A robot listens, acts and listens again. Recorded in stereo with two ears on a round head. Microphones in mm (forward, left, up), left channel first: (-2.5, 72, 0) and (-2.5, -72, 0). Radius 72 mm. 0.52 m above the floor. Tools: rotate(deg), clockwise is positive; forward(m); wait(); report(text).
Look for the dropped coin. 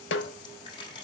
rotate(-35)
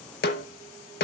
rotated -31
wait()
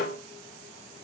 report("I heard a dropped coin, but can't make it out now. It was about straight ahead or 115° left.")